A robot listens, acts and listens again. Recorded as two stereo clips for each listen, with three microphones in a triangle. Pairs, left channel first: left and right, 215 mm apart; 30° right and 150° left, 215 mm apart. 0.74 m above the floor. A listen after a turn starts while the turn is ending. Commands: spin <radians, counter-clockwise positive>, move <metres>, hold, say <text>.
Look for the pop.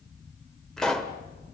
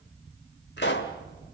say Found it: a pop, straight ahead.